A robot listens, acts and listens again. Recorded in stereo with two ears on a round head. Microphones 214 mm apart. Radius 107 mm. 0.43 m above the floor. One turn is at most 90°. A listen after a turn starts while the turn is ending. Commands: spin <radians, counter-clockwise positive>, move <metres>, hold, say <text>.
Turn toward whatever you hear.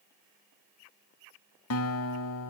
spin 1.13
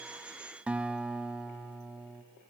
say Facing the guitar.